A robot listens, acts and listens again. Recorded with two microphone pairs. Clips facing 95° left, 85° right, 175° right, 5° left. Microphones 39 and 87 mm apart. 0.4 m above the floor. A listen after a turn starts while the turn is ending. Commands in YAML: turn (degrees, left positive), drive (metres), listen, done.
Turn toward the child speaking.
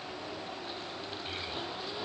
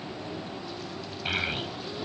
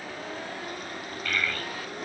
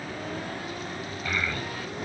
turn: -70
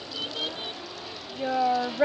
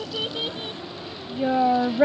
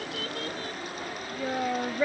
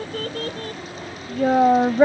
done: "Found it: a child speaking, straight ahead."